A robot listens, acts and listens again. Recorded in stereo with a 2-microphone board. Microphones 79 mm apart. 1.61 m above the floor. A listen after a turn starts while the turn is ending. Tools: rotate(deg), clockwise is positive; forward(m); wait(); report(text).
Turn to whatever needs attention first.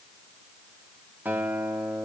wait()
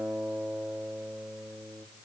wait()
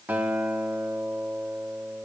report("I can't make out anything urgent to turn to.")